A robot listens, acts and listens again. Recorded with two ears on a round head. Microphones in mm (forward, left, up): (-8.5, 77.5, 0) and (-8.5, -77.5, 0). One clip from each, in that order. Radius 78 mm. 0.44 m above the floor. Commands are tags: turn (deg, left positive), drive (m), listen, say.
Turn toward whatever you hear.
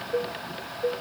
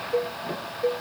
<turn deg="-25"/>
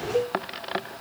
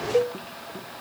<turn deg="-130"/>
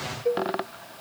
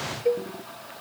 <turn deg="-20"/>
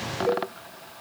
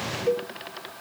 <say>Facing the cowbell.</say>